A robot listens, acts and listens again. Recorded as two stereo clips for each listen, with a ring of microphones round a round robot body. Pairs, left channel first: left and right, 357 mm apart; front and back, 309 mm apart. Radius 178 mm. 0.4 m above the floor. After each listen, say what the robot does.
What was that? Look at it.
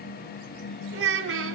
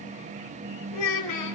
Turn 35° right.
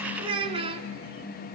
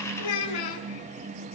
Turn 15° right.
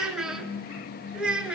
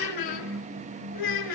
Facing the child speaking, 2 to 4 m away.